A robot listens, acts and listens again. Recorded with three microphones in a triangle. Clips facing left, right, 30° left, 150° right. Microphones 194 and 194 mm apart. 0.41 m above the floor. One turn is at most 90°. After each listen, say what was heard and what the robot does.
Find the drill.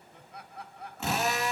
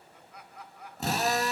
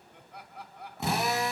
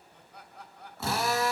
The drill: 40° right. Turn 40° right.
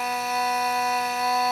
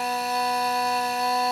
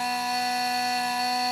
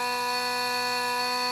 The drill is now 35° right. Turn 35° right.
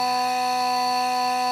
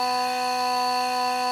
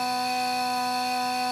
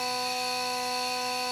Found it: a drill, straight ahead.